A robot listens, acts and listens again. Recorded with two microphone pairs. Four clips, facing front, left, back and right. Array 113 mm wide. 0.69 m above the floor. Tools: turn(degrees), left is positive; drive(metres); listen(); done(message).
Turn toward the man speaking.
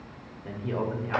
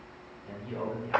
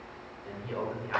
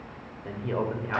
turn(degrees=-85)
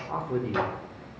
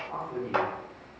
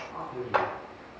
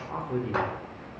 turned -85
turn(degrees=-25)
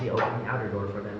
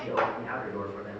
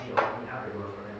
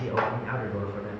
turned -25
turn(degrees=-30)
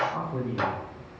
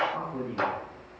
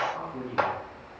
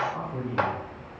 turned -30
turn(degrees=-10)
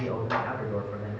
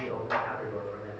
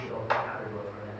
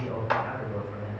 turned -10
turn(degrees=-10)
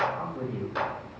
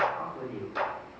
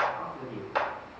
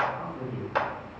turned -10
done("Found it: a man speaking, straight ahead.")